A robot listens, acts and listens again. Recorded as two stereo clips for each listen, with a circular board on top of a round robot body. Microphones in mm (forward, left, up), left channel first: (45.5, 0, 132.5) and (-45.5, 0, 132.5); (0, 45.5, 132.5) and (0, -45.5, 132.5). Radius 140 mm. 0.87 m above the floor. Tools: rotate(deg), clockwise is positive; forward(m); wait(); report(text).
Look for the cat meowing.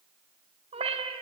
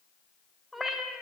rotate(-180)
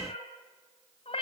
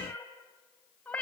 rotate(-15)
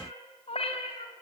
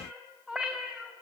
rotate(10)
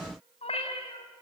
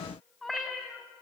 report("Facing the cat meowing.")